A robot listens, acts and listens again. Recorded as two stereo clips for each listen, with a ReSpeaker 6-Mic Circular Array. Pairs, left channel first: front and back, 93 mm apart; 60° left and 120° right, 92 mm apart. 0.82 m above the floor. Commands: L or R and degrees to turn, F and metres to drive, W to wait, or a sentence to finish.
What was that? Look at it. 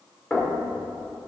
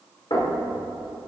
L80
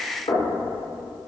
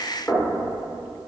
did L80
Found it: knocking, straight ahead.